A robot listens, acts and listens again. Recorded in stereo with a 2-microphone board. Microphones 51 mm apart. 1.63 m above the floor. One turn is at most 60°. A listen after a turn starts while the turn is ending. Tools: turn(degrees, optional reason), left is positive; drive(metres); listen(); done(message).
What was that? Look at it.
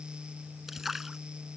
turn(degrees=-30)
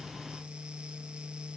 listen()
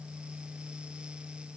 done("I heard a splash, but can't make it out now. It was about 25° left or 145° right.")